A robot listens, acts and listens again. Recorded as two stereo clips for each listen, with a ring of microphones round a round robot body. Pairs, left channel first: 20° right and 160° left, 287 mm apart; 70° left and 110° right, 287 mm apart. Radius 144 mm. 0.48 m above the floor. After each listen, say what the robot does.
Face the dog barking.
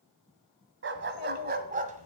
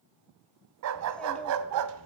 Turn 140° right.
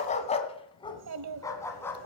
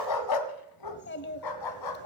Turn 60° left.
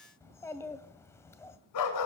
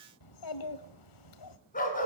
Facing the dog barking, 2 to 4 m away.